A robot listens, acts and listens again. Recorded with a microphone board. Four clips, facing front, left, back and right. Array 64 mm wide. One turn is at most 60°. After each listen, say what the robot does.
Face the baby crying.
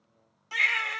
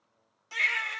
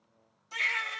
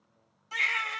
Facing the baby crying, 1 to 2 m away.